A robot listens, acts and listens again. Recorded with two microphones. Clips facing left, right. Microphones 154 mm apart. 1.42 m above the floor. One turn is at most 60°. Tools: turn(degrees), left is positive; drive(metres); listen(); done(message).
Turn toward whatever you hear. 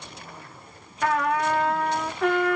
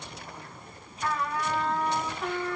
turn(degrees=60)
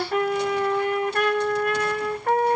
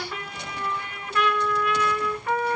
turn(degrees=50)
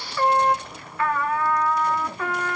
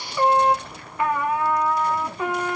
turn(degrees=-15)
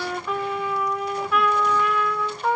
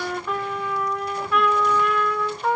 done("Facing the trumpet, 1 to 2 m away.")